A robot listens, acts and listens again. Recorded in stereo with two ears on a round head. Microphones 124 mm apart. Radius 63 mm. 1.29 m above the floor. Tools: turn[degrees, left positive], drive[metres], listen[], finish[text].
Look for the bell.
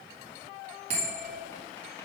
Thought: The bell: about 50° right or 130° right.
Action: turn[-50]
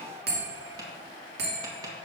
Thought: So it is at 80° right.
Action: turn[-80]
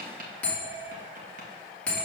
Thought: The bell is now 10° left.
Action: turn[10]
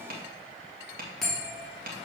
Action: finish[Found it: a bell, straight ahead.]